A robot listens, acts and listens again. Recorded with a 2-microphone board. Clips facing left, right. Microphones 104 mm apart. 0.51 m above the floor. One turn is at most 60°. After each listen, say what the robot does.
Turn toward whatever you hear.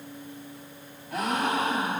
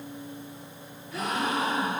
Turn 60° left.
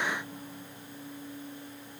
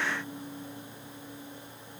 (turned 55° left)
Keep listening.
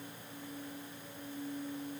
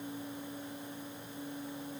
I heard a gasp, but can't make it out now. It was about 10° left or 60° left.